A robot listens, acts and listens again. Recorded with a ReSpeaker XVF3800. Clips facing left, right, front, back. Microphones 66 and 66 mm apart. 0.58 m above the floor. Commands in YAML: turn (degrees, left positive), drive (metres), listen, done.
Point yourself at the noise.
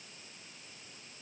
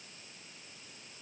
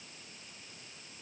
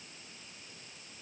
listen: true
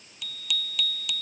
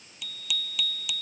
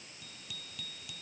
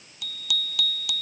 turn: -175
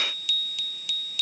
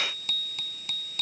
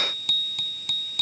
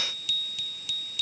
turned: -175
turn: -40
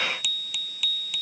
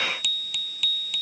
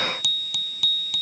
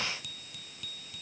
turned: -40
done: "Found it: a bicycle bell, straight ahead."